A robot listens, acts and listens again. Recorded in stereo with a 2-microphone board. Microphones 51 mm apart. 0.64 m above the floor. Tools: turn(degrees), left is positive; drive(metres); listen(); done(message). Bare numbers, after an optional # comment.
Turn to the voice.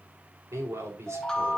# The man speaking: about 65° right or 115° right.
turn(-65)
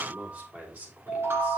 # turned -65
# So it is at 35° right.
turn(-35)
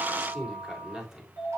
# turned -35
# The man speaking is now 15° right.
turn(-15)
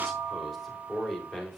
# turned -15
done("Found it: a man speaking, straight ahead.")